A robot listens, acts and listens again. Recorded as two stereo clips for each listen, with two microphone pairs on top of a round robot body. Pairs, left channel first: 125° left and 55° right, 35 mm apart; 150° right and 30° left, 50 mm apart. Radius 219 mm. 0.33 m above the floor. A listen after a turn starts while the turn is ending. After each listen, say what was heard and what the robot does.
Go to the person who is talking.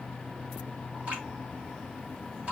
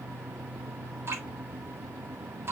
Keep listening.
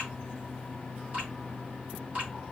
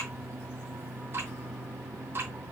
Keep listening.
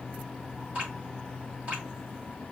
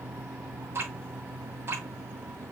I can't make out anyone speaking, only dripping.